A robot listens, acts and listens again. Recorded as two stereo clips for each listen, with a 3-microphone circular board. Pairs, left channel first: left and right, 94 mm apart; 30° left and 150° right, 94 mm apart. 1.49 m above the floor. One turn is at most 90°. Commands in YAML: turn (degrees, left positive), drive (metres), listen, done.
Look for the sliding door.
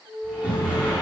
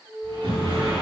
turn: -90
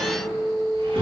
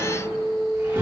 turn: -85
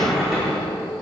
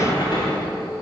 done: "Facing the sliding door."